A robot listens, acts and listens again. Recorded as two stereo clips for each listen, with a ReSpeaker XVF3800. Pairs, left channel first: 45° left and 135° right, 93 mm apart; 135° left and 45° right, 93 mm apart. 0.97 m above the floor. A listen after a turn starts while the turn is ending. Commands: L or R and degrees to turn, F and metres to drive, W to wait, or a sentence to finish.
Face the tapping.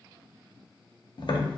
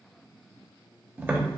L20
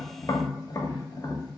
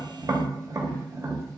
Facing the tapping, under 1 m away.